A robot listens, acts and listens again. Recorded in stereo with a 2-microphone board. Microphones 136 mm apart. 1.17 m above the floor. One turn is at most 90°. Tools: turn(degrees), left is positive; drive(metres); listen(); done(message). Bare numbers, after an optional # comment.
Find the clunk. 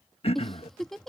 listen()
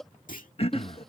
turn(90)
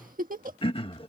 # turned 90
done("Facing where the clunk came from. I can't hear it now.")